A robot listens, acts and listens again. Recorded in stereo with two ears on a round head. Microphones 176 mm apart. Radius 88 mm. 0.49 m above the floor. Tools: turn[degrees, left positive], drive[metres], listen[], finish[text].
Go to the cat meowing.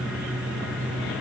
Action: listen[]
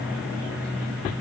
Action: listen[]
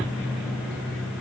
Action: finish[I can't make out a cat meowing to turn to.]